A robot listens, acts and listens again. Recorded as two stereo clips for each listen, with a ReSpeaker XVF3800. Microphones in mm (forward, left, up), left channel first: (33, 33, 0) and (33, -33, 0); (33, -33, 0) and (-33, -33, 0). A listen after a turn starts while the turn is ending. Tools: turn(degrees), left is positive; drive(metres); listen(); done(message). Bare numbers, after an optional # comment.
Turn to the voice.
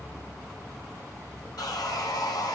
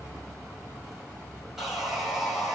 listen()
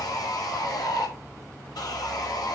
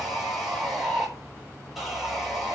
listen()
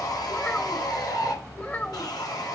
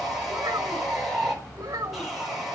# The child speaking: 150° left.
turn(150)
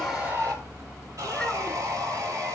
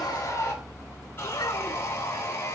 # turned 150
listen()
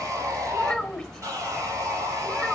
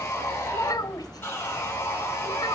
done("Found it: a child speaking, straight ahead.")